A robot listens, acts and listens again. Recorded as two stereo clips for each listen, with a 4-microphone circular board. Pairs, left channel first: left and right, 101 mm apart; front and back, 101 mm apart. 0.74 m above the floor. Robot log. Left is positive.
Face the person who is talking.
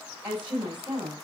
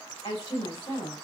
note: The woman speaking: 15° right.
cmd yaw -15
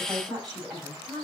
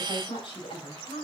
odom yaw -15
end: Facing the woman speaking.